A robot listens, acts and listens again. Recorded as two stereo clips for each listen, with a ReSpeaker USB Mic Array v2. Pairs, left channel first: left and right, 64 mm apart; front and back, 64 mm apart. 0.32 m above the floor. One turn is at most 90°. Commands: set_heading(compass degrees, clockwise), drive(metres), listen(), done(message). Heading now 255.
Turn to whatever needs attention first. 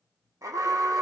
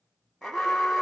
set_heading(345)
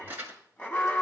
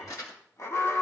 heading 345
set_heading(320)
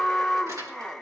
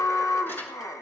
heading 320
done("Found it: an alarm, straight ahead.")